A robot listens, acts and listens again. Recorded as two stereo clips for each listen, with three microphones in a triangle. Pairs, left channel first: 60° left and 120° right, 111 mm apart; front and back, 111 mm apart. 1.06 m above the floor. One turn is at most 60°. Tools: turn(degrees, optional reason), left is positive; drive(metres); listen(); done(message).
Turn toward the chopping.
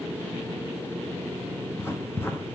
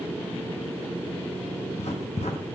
listen()
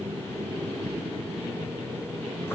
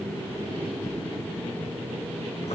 listen()
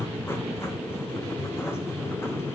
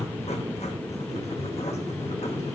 done("I can't make out chopping, only writing.")